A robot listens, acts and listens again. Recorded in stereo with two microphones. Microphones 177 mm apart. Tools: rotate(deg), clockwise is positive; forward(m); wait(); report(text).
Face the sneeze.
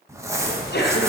rotate(-90)
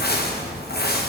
report("Facing where the sneeze came from. I can't hear it now.")